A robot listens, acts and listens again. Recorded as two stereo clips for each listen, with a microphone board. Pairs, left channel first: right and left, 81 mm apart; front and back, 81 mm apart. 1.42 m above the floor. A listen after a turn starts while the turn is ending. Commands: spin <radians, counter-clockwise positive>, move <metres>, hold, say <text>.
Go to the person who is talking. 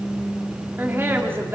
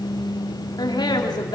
spin 0.52
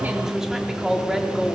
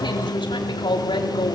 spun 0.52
move 1.0
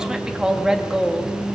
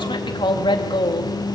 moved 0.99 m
spin 0.17
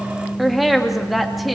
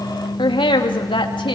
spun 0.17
move 1.0
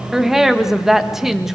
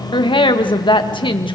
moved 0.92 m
move 1.0
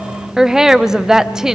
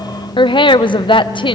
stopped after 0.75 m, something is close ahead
say I am next to the woman speaking.